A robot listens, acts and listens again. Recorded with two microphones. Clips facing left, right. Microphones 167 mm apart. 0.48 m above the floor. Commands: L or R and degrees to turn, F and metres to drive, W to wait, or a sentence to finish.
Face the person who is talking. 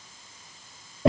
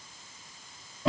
W
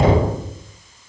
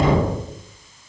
W
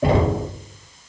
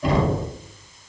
I can't make out anyone speaking, only knocking.